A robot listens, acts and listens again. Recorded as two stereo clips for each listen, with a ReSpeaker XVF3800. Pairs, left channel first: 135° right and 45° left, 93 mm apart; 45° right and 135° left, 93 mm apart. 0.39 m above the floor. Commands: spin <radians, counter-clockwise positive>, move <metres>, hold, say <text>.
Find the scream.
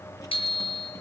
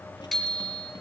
hold
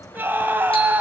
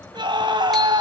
spin 1.92
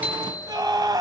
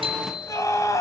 say Facing the scream.